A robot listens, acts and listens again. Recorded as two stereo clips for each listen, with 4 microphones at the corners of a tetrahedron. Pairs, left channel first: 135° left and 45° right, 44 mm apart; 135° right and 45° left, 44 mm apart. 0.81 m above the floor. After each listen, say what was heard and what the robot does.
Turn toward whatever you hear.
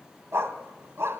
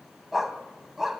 The dog barking: 35° right. Turn 35° right.
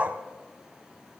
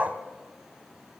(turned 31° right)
Facing the dog barking, 1 to 2 m away.